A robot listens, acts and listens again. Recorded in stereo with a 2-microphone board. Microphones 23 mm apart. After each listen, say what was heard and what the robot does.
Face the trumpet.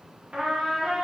The trumpet: about 65° right or 115° right. Turn 65° right.
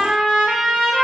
So it is at 45° right. Turn 45° right.
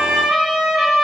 The trumpet is now 15° right. Turn 15° right.
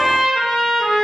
Facing the trumpet.